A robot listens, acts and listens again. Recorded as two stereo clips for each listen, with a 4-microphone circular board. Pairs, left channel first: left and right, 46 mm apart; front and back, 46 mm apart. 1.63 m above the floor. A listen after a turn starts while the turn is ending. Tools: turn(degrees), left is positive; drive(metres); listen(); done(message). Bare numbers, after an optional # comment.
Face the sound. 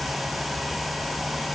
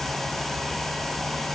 listen()
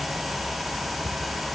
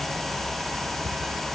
listen()
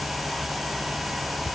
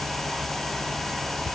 done("I can't make out anything.")